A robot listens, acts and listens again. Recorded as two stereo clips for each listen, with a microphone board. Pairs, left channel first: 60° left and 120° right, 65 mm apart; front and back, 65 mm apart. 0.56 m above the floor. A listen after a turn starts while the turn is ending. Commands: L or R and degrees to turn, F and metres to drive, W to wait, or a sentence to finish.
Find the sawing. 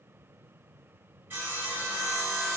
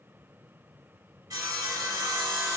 R175
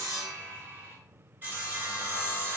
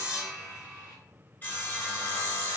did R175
R60
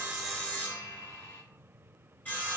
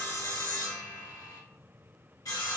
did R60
Facing the sawing.